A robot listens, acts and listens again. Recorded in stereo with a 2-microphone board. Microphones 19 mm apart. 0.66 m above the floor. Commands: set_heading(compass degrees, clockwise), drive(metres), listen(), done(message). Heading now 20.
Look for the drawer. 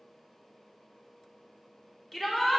listen()
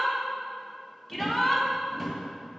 set_heading(350)
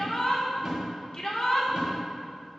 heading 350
set_heading(15)
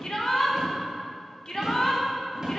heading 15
set_heading(45)
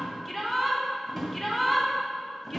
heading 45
done("Facing the drawer.")